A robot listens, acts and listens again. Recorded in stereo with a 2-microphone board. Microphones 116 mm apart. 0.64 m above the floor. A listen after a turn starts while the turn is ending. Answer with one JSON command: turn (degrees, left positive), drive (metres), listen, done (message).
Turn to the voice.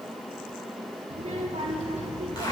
{"turn": -60}
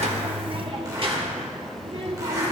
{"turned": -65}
{"turn": -50}
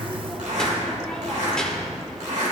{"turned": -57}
{"done": "Found it: a child speaking, straight ahead, 1 to 2 m away."}